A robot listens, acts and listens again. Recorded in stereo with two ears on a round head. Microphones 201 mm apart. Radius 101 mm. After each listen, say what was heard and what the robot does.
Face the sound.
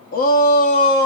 The shout: about 40° left or 140° left. Turn 40° left.
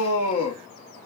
So it is at 90° left. Turn 90° left.
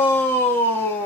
The shout is now 10° left. Turn 10° left.
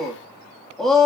Found it: a shout, straight ahead, 1 to 2 m away.